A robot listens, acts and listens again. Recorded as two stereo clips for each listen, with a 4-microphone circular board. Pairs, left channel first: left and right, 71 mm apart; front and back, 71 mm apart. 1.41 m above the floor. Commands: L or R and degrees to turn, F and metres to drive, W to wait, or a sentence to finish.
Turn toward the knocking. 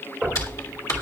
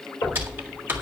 Facing the knocking.